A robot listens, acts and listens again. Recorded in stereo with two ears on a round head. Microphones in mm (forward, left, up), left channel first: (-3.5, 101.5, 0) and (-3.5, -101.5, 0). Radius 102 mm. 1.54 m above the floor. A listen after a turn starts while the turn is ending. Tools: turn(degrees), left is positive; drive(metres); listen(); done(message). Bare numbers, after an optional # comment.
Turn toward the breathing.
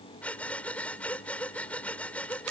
turn(30)
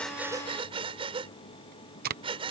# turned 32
# So it is at 25° right.
turn(-25)
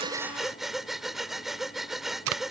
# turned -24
done("Found it: breathing, straight ahead.")